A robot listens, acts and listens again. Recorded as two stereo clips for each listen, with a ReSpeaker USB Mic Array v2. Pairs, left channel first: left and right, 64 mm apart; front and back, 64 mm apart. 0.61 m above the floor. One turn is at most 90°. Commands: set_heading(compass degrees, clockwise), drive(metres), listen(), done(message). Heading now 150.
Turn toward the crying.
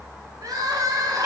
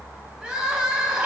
set_heading(240)
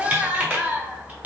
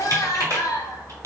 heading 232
set_heading(252)
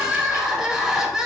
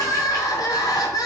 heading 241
set_heading(251)
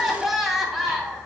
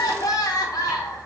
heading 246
done("Facing the crying, under 1 m away.")